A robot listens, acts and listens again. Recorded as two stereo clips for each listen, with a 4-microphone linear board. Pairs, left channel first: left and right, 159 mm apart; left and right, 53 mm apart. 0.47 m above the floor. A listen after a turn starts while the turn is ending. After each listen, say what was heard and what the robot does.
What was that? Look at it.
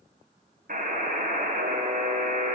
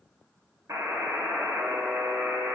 The buzzer: about 65° right or 115° right. Turn 65° right.
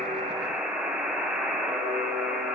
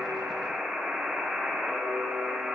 So it is at 10° right. Turn 10° right.
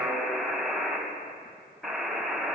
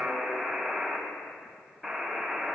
Found it: a buzzer, straight ahead.